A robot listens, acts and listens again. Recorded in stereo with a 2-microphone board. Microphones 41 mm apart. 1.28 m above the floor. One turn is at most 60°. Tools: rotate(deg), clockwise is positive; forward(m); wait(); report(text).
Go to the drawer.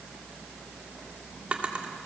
rotate(35)
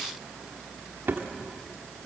rotate(60)
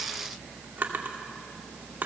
rotate(50)
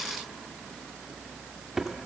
rotate(10)
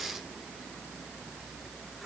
forward(1.0)
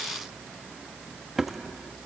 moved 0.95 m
forward(1.0)
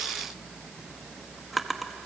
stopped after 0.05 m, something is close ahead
report("Arrived at the drawer, straight ahead.")